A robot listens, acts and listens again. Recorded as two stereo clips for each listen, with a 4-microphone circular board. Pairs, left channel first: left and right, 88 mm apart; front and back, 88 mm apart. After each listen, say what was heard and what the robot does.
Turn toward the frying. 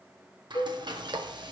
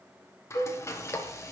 The frying: 60° right. Turn 60° right.
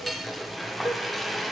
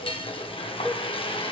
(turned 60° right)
Found it: frying, straight ahead.